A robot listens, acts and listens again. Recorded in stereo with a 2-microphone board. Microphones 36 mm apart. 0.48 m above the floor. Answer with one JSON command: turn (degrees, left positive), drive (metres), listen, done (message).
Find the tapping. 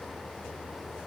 {"listen": true}
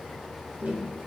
{"turn": -60}
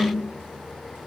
{"turn": -60}
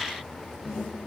{"done": "Found it: tapping, straight ahead, 1 to 2 m away."}